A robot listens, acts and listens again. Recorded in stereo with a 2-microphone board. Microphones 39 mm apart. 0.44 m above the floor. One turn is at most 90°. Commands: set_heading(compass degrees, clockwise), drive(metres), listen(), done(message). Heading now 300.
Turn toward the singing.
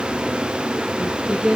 set_heading(325)
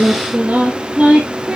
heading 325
set_heading(0)
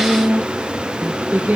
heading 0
set_heading(90)
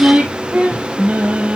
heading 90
set_heading(135)
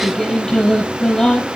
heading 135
set_heading(120)
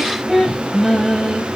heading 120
done("Found it: singing, straight ahead, 2 to 4 m away.")